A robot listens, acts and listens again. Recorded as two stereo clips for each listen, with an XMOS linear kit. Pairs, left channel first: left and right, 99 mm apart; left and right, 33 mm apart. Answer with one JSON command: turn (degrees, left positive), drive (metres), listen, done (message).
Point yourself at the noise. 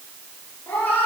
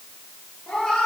{"turn": 15}
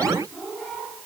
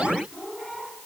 {"turn": 30}
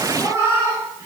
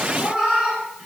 {"turn": -30}
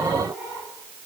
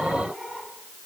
{"turn": -20}
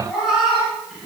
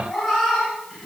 {"done": "Facing the cat meowing."}